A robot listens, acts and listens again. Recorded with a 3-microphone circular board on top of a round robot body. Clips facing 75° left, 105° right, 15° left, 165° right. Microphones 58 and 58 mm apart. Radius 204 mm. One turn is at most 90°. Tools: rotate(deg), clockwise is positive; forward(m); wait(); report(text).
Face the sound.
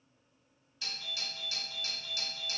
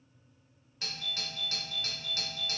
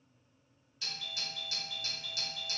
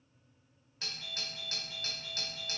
rotate(90)
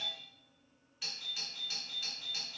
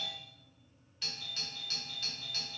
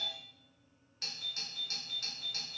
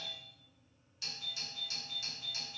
rotate(10)
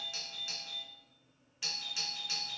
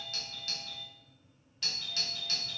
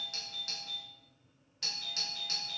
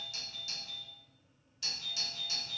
report("Found it: a doorbell, straight ahead.")